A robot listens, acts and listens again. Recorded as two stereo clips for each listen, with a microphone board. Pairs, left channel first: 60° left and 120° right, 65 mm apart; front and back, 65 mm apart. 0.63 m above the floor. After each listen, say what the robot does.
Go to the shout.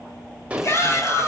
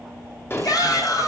Turn 20° left.
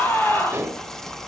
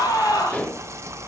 Drive 1.0 m forward.
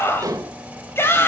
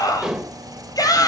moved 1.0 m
Turn 10° left.
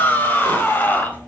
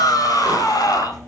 Drive 1.0 m forward.
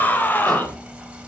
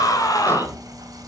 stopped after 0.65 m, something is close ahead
Blocked. The shout is further on, straight ahead.